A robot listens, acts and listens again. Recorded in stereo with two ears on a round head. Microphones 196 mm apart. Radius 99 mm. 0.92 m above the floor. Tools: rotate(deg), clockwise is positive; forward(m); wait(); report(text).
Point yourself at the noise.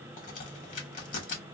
rotate(-40)
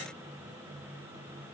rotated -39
wait()
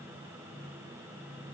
report("I heard a crack, but can't make it out now. It was about straight ahead or 100° left.")